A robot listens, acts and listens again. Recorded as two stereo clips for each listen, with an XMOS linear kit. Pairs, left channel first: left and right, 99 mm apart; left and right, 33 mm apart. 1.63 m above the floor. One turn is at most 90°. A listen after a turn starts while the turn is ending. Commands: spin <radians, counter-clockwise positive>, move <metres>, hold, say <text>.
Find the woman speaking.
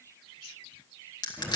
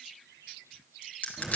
hold
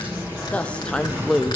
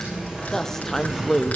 spin 0.52
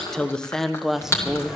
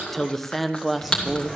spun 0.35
spin -0.52
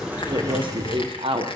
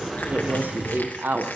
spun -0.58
spin -1.57
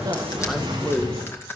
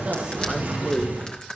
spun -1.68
spin -0.26
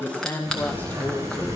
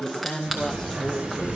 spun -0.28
spin 0.26
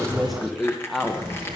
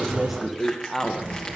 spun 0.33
say Facing the woman speaking.